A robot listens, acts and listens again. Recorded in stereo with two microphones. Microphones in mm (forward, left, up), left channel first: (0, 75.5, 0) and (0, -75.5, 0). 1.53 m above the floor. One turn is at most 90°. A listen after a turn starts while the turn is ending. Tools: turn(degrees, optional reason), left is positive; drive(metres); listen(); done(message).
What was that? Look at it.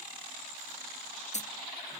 turn(degrees=50, reason="The dropped coin: about 50° left or 130° left.")
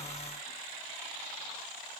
listen()
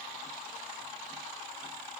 done("I heard a dropped coin, but can't make it out now. It was about straight ahead or 80° left.")